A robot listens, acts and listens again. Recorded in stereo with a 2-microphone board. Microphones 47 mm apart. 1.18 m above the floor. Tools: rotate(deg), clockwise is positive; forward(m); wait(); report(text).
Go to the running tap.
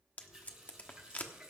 rotate(30)
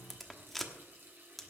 rotate(135)
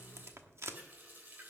rotate(40)
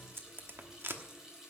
rotate(10)
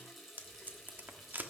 forward(1.0)
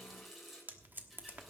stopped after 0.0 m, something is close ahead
report("Blocked. The running tap is further on, straight ahead.")